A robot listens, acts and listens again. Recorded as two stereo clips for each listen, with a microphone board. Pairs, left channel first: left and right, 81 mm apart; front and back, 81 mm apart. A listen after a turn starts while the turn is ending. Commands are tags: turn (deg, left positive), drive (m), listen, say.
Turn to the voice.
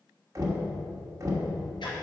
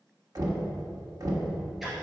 <listen/>
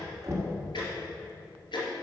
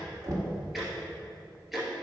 <listen/>
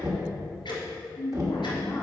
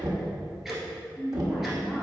<turn deg="105"/>
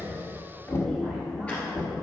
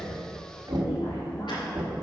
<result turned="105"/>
<listen/>
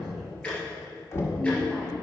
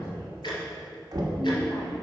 <listen/>
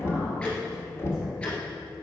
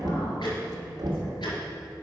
<say>I heard a woman speaking from this way, but can't make it out now.</say>